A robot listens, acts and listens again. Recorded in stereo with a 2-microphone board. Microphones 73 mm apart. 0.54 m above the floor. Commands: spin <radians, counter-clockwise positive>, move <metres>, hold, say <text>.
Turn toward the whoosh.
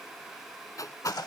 spin 0.87
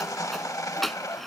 say Found it: a whoosh, straight ahead.